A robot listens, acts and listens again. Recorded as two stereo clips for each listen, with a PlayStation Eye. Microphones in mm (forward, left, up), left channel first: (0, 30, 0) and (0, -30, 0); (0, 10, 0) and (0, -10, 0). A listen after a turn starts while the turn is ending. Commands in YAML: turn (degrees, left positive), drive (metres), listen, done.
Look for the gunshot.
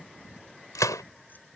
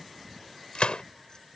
turn: 75
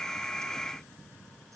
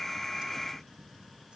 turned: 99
listen: true
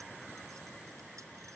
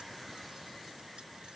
done: "I heard a gunshot, but can't make it out now. It was about 10° left or 25° right."